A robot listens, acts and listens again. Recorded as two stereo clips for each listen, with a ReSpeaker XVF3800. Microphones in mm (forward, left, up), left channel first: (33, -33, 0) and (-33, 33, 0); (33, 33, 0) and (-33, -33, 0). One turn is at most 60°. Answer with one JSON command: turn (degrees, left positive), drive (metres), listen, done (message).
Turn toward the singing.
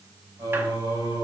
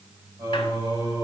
{"turn": -60}
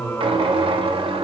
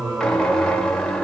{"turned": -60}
{"turn": -60}
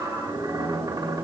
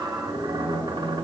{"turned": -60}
{"turn": -45}
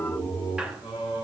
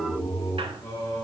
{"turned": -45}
{"turn": -15}
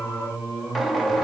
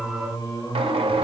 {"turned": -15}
{"done": "Facing the singing, over 4 m away."}